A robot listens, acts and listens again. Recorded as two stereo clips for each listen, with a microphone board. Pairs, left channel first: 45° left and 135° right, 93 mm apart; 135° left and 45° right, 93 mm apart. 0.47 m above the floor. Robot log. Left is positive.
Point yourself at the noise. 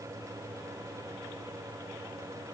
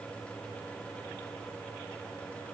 cmd idle
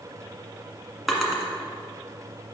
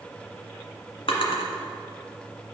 note: The drawer: 135° left.
cmd yaw +135
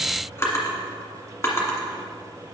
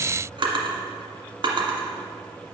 note: The drawer is now 15° right.
cmd yaw -15
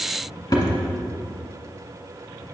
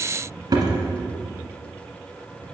end: Found it: a drawer, straight ahead.